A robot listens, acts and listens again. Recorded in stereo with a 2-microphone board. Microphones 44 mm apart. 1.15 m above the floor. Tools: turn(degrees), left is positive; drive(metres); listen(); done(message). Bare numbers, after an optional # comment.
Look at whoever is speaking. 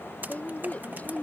# The woman speaking: about 40° left or 140° left.
turn(40)
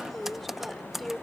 done("Facing the woman speaking.")